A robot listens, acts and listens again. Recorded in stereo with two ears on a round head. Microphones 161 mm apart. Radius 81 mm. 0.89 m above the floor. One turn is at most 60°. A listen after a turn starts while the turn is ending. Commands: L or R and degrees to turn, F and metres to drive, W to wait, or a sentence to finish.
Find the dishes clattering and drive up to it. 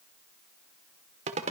W
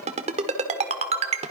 W
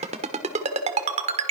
I can't make out dishes clattering to turn to.